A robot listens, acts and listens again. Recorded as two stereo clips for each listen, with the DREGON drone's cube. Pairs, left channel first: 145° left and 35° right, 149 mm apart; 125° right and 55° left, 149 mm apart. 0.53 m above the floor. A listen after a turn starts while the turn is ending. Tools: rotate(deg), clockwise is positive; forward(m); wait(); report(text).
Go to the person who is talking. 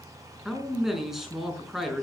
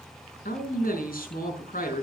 rotate(120)
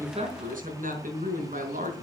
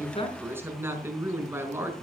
rotate(20)
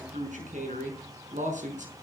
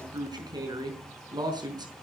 forward(1.0)
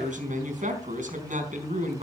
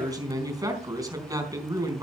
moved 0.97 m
rotate(10)
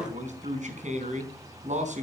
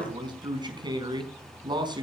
forward(1.0)
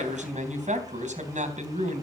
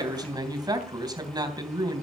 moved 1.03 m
forward(1.0)
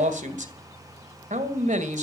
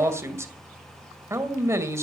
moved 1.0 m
rotate(15)
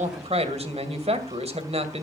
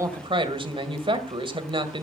forward(1.0)
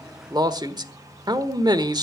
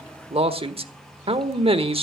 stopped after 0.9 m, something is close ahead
rotate(-20)
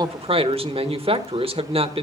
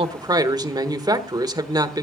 report("Arrived at the man speaking, straight ahead.")